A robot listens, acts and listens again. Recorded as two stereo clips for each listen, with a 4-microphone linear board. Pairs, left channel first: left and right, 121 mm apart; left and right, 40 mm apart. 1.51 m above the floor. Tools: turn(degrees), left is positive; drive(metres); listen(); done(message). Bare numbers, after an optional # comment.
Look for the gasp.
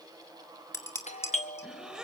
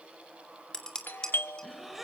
turn(-30)
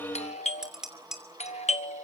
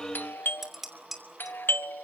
listen()
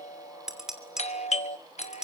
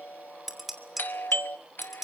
done("I heard a gasp, but can't make it out now. It was about 25° left or 145° right.")